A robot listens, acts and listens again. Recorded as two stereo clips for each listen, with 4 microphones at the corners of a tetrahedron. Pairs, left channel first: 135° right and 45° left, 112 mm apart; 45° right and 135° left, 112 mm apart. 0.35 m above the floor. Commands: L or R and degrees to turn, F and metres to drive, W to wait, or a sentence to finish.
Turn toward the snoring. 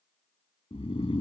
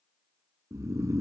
R165
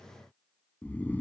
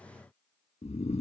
R60
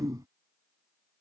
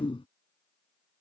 R10
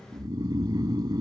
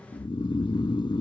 Facing the snoring.